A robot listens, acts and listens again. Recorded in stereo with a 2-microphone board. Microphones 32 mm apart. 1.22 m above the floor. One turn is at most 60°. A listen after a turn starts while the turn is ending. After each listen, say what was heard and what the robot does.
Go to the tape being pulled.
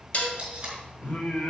The tape being pulled: about 30° right or 150° right. Turn 30° right.
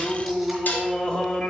Keep listening.
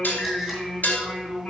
Keep listening.
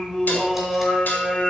I heard tape being pulled, but can't make it out now. It was about straight ahead or 120° right. I did not reach it.